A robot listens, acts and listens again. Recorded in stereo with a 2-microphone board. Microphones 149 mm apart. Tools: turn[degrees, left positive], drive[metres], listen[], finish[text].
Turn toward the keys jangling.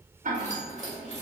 Thought: The keys jangling: about 50° left or 130° left.
Action: turn[50]
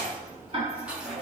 Thought: So it is at 10° right.
Action: turn[-10]
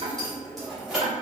Action: finish[Found it: keys jangling, straight ahead.]